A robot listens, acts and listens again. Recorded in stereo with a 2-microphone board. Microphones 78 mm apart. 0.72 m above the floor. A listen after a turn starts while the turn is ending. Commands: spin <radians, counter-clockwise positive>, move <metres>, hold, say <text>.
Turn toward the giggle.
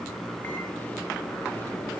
hold
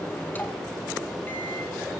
hold
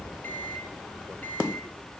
say I can't make out a giggle to turn to.